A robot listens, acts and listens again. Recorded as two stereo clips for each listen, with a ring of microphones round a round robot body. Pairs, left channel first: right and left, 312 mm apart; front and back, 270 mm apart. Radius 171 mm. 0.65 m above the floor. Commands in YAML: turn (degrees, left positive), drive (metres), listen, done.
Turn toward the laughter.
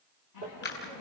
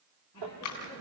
turn: -75
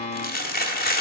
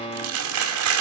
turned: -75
listen: true
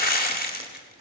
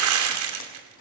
listen: true
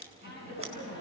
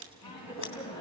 turn: -35
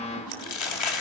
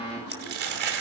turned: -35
done: "Facing the laughter, over 4 m away."